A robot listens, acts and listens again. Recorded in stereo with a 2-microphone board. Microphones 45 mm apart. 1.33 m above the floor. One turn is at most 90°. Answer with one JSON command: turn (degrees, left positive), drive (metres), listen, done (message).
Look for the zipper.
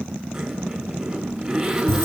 {"turn": -30}
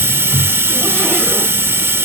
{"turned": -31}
{"listen": true}
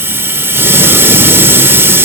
{"listen": true}
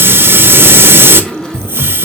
{"turn": 15}
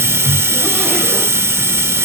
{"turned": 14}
{"listen": true}
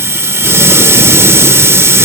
{"listen": true}
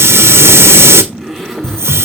{"done": "Facing the zipper, over 4 m away."}